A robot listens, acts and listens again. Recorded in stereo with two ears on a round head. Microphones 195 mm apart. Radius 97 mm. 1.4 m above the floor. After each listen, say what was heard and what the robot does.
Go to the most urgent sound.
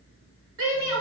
The shout: about 65° right or 115° right. Turn 65° right.
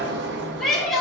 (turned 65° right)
Drive 1.0 m forward.
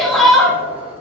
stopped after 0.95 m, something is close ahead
Arrived at the shout, straight ahead.